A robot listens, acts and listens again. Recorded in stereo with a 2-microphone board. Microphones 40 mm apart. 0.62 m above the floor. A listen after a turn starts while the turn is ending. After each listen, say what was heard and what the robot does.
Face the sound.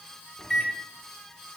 Turn 30° left.
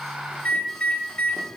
So it is at 145° left. Turn 145° left.
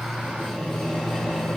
Facing the microwave.